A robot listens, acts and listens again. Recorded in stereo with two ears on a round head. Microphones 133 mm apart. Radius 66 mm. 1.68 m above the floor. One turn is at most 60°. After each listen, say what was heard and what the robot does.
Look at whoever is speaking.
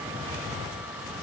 Keep listening.
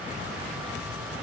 Keep listening.
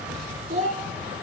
The child speaking: about 50° right or 130° right. Turn 50° right.
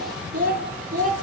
So it is at 50° right. Turn 50° right.
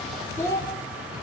The child speaking is now 20° left. Turn 20° left.
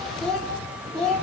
Found it: a child speaking, straight ahead, 2 to 4 m away.